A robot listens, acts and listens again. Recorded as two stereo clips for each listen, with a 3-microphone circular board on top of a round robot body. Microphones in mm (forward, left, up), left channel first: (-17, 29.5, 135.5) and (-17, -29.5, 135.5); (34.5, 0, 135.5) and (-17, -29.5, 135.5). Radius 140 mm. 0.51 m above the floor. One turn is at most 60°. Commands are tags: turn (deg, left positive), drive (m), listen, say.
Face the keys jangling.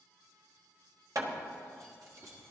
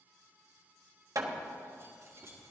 <turn deg="-60"/>
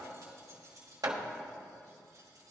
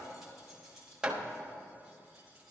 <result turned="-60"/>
<turn deg="-50"/>
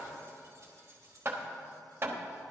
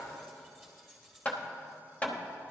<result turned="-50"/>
<turn deg="-55"/>
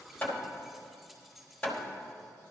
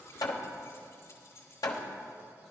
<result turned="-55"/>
<say>Facing the keys jangling.</say>